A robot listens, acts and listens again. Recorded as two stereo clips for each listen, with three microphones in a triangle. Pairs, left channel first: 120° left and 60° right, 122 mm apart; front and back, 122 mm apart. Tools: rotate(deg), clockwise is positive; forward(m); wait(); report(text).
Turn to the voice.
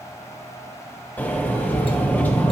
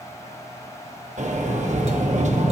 wait()
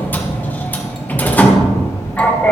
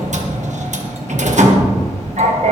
wait()
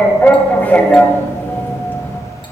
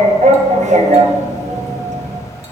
report("I can't make out anyone speaking to turn to.")